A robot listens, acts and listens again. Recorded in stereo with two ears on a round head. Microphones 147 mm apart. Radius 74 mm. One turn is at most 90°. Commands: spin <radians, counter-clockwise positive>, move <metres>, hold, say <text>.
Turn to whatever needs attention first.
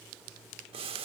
hold
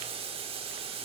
hold
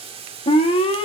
spin 0.61
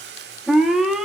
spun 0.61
say Facing the alarm.